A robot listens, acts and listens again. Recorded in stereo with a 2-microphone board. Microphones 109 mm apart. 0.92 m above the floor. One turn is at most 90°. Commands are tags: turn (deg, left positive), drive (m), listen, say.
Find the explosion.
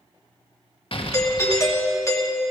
<turn deg="55"/>
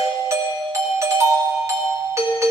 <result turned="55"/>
<listen/>
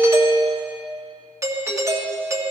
<say>I heard an explosion, but can't make it out now. It was about straight ahead or 70° left.</say>